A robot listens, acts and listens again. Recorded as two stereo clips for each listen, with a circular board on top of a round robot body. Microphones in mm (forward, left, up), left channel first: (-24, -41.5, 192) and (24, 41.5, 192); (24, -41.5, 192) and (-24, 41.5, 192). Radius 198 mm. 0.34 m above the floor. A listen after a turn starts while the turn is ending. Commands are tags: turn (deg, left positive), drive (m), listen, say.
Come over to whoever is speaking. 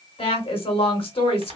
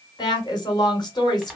<turn deg="-105"/>
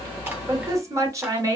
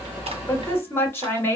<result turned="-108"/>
<drive m="1.0"/>
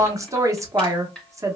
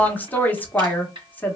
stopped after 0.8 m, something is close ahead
<turn deg="10"/>
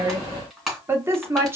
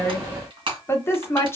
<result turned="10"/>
<say>Arrived at the woman speaking, straight ahead.</say>